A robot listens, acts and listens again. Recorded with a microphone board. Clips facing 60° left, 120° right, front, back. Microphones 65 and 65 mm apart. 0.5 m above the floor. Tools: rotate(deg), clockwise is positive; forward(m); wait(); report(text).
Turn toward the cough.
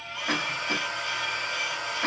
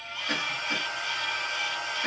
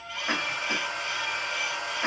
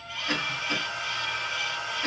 rotate(-55)
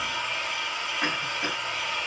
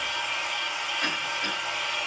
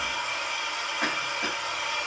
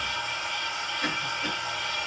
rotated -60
report("Facing the cough.")